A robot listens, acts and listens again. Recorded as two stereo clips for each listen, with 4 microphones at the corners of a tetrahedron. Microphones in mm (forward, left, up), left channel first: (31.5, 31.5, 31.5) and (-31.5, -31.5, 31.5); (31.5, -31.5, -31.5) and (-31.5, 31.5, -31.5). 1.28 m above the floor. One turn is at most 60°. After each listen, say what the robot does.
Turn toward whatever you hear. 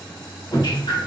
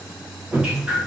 Turn 55° left.
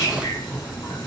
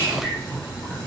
Turn 15° left.
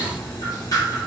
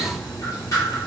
Found it: dripping, straight ahead.